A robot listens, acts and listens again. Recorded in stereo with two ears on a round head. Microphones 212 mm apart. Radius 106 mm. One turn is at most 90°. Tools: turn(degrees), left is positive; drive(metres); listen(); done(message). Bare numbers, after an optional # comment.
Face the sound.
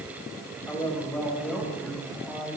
turn(30)
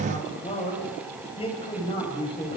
# So it is at 155° left.
turn(90)
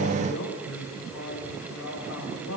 # The man speaking is now 70° left.
turn(70)
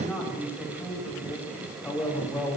done("Facing the man speaking.")